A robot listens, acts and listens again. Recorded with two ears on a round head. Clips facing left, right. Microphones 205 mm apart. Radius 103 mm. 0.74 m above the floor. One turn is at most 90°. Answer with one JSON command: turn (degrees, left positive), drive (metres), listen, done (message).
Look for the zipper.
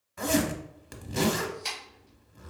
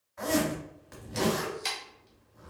{"turn": 45}
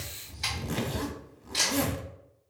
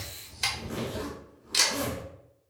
{"turn": 80}
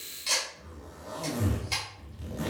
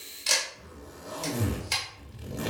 {"turn": -10}
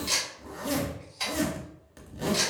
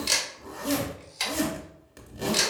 {"done": "Found it: a zipper, straight ahead, under 1 m away."}